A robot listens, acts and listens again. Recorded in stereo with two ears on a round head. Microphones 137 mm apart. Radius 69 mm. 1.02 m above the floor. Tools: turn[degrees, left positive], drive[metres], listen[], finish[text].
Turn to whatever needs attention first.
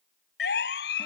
Action: turn[90]
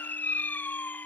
Thought: So it is at 10° left.
Action: turn[10]
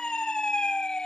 Action: finish[Facing the siren.]